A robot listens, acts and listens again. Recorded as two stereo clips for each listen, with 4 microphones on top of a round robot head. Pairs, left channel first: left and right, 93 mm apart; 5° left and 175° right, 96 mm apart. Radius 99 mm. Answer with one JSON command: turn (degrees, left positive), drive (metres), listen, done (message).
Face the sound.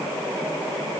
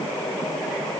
{"listen": true}
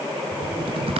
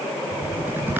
{"turn": -100}
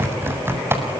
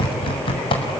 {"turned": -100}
{"turn": -25}
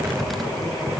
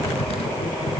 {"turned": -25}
{"done": "Facing the typing on a keyboard, over 4 m away."}